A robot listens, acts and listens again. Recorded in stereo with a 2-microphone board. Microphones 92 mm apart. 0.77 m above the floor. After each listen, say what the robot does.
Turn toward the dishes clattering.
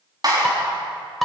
Turn 30° left.
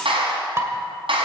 Turn 30° right.
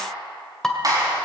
Facing the dishes clattering, 1 to 2 m away.